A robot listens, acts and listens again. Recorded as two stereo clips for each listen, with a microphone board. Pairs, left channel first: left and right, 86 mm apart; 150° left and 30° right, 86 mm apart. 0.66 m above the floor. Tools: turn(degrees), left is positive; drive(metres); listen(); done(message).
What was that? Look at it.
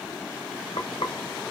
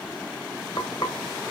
turn(degrees=115)
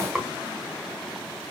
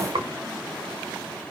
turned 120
done("Found it: frying, straight ahead.")